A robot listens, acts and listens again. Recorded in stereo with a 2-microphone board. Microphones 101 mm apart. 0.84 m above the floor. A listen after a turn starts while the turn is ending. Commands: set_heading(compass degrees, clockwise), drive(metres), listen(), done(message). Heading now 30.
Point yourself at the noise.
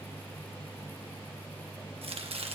set_heading(100)
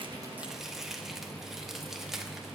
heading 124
done("Facing the chopping, 1 to 2 m away.")